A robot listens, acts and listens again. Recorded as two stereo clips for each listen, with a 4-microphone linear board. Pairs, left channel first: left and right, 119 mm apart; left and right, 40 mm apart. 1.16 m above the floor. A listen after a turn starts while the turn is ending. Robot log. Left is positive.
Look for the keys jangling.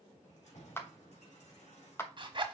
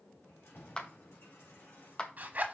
note: The keys jangling: about 75° left or 105° left.
cmd yaw +75
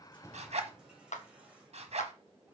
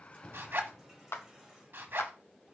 note: So it is at 10° right.
cmd yaw -10
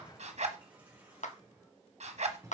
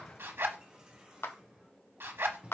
note: The keys jangling is now 25° right.
cmd yaw -25
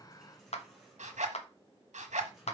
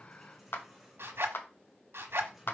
end: Found it: keys jangling, straight ahead, 2 to 4 m away.